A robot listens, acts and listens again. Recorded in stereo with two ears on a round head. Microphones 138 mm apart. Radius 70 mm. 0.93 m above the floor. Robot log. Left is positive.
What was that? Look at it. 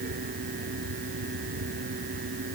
cmd idle
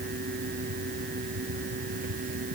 cmd idle
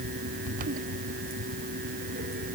end: I can't make out anything.